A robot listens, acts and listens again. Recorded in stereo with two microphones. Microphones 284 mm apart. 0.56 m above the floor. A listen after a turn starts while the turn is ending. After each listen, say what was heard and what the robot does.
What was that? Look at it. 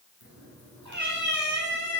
Turn 90° right.
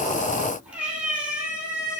Facing the cat meowing, over 4 m away.